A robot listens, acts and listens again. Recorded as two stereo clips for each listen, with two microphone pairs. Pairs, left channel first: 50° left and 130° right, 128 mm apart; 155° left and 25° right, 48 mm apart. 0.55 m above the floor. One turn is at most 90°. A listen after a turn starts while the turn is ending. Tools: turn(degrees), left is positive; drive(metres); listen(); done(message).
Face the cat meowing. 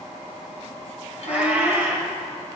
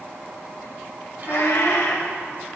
turn(degrees=90)
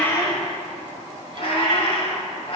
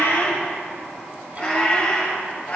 turn(degrees=90)
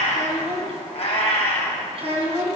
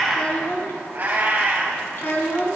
turn(degrees=25)
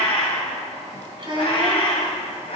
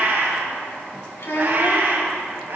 turn(degrees=15)
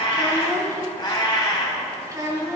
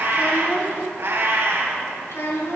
done("Found it: a cat meowing, straight ahead.")